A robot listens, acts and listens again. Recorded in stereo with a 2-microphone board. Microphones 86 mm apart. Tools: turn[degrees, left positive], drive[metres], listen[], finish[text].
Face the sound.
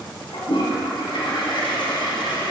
Action: turn[90]
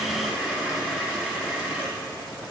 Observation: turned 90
Thought: So it is at 10° right.
Action: turn[-10]
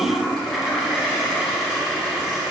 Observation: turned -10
Action: finish[Facing the toilet flushing, 1 to 2 m away.]